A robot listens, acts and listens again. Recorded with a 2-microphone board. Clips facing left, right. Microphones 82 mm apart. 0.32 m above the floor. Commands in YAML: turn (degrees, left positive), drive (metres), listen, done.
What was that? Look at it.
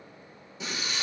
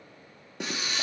turn: -75
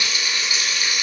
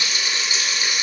turn: -30
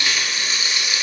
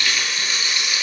turn: 20
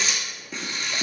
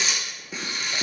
done: "Found it: frying, straight ahead, under 1 m away."